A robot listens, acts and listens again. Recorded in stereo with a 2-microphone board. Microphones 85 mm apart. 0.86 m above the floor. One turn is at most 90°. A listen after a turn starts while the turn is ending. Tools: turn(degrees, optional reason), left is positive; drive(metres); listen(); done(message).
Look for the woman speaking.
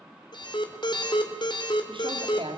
turn(degrees=-90)
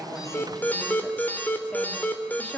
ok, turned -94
turn(degrees=15, reason="So it is at 15° left.")
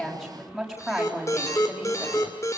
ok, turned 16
done("Facing the woman speaking.")